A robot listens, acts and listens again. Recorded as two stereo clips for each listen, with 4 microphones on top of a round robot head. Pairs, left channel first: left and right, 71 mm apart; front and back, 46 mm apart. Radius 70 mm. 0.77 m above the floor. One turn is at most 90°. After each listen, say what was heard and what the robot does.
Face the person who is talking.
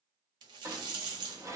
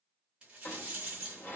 Keep listening.
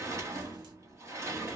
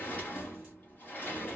Keep listening.
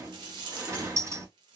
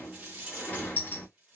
I can't make out anyone speaking to turn to.